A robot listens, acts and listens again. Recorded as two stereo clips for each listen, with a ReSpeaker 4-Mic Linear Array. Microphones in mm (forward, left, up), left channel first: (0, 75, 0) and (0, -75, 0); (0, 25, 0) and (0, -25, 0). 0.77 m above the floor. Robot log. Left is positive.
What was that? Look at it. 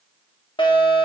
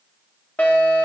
note: The fire alarm: about 35° left or 145° left.
cmd yaw +35
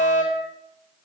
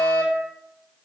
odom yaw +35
note: So it is at 105° left.
cmd yaw +105
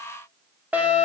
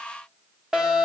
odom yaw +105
note: The fire alarm is now 10° right.
cmd yaw -10
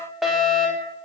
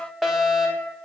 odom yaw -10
end: Found it: a fire alarm, straight ahead, 2 to 4 m away.